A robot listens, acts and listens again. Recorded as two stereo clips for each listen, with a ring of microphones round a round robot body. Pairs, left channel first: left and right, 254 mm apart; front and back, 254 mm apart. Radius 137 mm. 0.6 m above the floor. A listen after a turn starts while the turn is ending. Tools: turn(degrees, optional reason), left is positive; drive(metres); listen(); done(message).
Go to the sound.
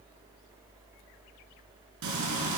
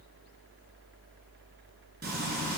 turn(degrees=-120, reason="The frying: 120° right.")
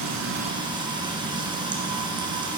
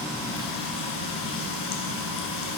turn(degrees=-15, reason="The frying is now 15° right.")
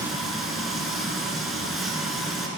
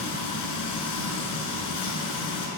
drive(metres=1.0)
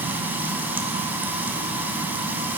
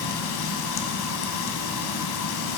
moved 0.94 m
drive(metres=1.0)
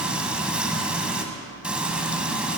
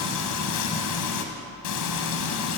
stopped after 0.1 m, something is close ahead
done("I am next to the frying.")